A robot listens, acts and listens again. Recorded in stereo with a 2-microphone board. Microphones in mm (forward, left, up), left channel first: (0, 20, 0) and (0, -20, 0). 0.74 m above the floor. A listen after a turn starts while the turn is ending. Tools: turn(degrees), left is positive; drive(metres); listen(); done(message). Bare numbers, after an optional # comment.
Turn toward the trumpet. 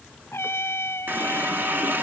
turn(90)
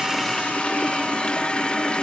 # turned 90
listen()
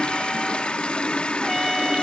listen()
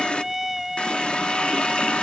done("Found it: a trumpet, straight ahead.")